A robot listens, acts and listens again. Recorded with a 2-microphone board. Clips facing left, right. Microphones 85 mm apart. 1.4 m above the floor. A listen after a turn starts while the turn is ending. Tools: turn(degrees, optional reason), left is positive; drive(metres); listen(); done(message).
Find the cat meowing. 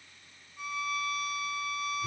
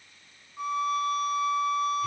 listen()
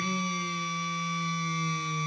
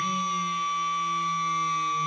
listen()
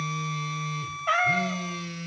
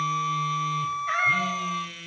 turn(degrees=70, reason="The cat meowing: about 70° left or 110° left.")
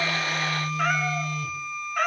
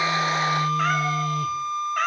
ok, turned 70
done("Facing the cat meowing.")